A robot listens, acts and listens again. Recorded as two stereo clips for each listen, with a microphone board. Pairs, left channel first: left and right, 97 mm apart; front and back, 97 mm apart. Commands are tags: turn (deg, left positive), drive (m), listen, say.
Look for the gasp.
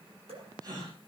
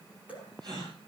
<turn deg="-140"/>
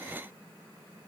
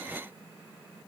<say>I heard a gasp from this way, but can't make it out now.</say>